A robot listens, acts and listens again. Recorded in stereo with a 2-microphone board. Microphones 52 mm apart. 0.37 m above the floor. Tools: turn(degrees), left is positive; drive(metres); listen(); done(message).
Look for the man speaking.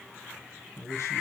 turn(degrees=65)
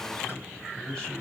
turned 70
turn(degrees=20)
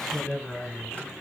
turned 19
done("Found it: a man speaking, straight ahead, 2 to 4 m away.")